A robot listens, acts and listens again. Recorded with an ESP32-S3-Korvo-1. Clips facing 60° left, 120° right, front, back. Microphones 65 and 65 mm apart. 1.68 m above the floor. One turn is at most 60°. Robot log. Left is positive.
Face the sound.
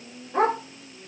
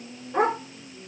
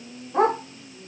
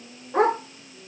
note: The dog barking: 160° left.
cmd yaw +60
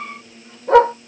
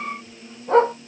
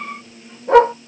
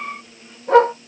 note: The dog barking is now 85° left.
cmd yaw +60
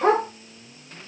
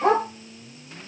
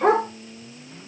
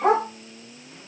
note: The dog barking is now 25° left.
cmd yaw +25
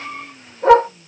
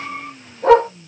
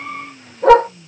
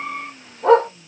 end: Facing the dog barking, 2 to 4 m away.